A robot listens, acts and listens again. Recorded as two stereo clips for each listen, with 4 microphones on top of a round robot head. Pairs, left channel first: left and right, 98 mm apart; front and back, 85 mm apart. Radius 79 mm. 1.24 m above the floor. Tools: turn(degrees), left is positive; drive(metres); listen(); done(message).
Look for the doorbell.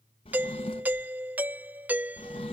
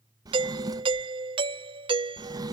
turn(degrees=-165)
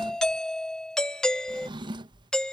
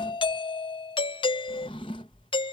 done("Found it: a doorbell, straight ahead.")